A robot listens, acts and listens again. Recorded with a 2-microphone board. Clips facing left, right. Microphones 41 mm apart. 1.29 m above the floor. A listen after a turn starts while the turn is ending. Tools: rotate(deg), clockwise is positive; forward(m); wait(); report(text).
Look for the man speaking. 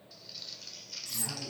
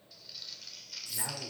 rotate(50)
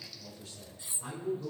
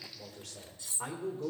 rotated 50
rotate(90)
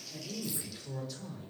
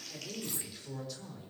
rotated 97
report("Found it: a man speaking, straight ahead, 2 to 4 m away.")